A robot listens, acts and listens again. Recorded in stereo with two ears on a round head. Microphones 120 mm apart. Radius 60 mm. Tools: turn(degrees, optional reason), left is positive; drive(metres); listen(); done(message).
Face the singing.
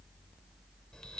listen()
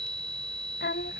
turn(degrees=90)
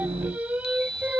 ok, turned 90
turn(degrees=-10, reason="So it is at 10° right.")
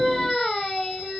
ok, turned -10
done("Facing the singing.")